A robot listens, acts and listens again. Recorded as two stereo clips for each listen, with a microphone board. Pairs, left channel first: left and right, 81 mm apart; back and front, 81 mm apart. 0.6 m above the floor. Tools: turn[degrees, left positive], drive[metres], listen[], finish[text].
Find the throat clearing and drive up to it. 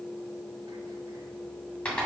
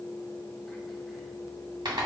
Action: listen[]
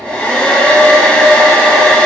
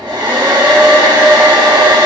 Action: listen[]
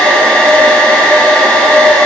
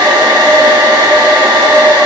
Action: finish[I can't make out throat clearing to turn to.]